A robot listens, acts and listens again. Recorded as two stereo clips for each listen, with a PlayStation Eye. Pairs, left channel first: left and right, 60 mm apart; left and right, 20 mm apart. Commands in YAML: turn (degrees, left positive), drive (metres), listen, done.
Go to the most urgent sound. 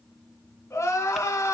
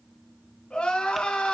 turn: 50
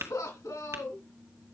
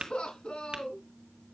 turn: 80
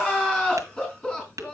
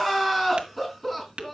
turn: 15
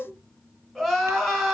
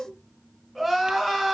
drive: 1.0
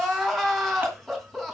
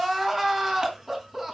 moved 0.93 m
drive: 1.0
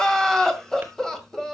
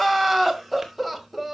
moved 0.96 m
turn: 10
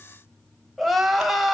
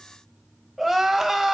drive: 1.0
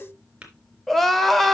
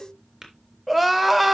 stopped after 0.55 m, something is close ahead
done: "I am next to the crying."